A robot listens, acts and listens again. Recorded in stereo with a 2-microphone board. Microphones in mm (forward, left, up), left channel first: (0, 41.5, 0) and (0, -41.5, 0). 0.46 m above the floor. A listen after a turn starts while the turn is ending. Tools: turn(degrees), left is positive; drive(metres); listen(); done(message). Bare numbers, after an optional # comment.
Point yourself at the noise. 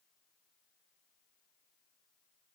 listen()
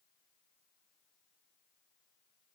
listen()
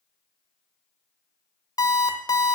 # The alarm clock: about 50° left or 130° left.
turn(50)
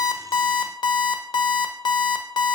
# So it is at 80° left.
turn(80)
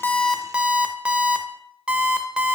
# The alarm clock is now 15° right.
turn(-15)
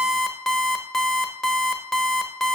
done("Facing the alarm clock.")